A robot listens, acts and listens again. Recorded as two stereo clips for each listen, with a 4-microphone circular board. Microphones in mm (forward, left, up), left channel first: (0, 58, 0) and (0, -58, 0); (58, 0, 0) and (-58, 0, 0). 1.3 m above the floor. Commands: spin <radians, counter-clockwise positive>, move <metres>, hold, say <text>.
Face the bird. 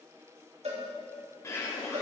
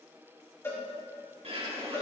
spin 2.71
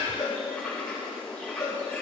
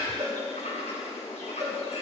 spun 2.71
spin 0.17
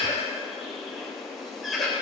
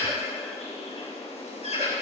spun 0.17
say Found it: a bird, straight ahead.